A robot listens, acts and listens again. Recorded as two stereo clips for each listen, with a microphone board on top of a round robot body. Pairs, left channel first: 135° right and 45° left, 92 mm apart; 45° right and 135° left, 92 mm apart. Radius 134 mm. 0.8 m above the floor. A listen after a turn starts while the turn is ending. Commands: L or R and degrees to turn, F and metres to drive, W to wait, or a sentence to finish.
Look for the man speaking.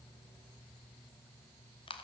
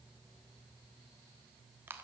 W
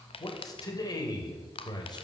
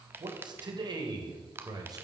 R175
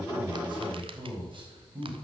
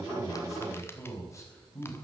L15
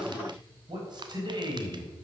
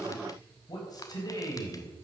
Found it: a man speaking, straight ahead, over 4 m away.